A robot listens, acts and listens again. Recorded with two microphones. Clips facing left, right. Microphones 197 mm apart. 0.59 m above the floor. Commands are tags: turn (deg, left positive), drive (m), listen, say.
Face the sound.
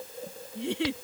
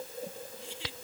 <turn deg="70"/>
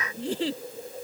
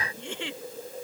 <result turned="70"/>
<turn deg="35"/>
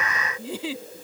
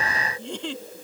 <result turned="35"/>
<say>Facing the giggle.</say>